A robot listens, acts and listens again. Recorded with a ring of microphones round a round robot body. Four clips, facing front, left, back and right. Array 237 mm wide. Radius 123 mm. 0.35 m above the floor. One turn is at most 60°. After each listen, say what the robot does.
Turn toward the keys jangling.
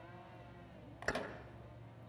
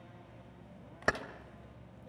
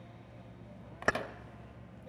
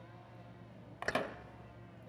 Turn 60° left.
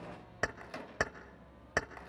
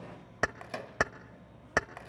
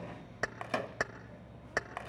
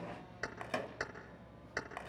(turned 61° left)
Turn 60° left.
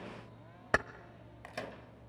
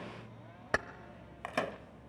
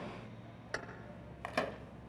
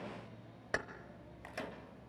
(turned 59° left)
Turn 25° left.
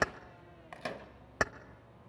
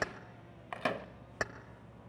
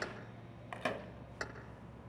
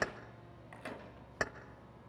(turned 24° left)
Facing the keys jangling, under 1 m away.